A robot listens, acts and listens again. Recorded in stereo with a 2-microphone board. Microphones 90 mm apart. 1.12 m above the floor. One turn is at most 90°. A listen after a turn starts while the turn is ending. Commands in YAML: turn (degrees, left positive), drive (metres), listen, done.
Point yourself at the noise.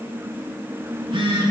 turn: -70
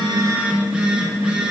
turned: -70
turn: -10
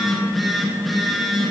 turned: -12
done: "Facing the phone buzzing, 1 to 2 m away."